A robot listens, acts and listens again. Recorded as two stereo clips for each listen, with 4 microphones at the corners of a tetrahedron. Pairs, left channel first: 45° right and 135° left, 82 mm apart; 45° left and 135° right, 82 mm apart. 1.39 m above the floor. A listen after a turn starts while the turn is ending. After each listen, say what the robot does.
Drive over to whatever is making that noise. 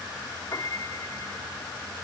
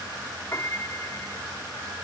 Drive 1.0 m forward.
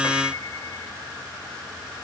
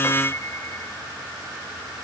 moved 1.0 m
Keep listening.
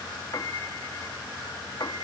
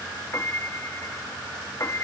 Drive 1.0 m forward.
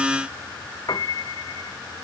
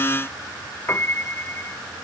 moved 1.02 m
Turn 10° right.
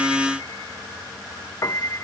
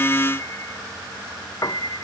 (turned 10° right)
Drive 1.0 m forward.
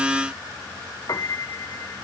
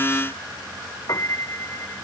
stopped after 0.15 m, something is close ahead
Arrived at the piano, straight ahead.